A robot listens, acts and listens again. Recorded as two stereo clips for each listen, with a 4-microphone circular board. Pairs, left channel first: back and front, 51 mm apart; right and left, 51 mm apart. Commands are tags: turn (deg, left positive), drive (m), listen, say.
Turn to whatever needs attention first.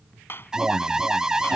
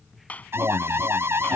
<turn deg="75"/>
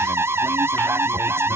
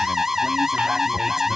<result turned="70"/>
<say>Found it: an alarm, straight ahead.</say>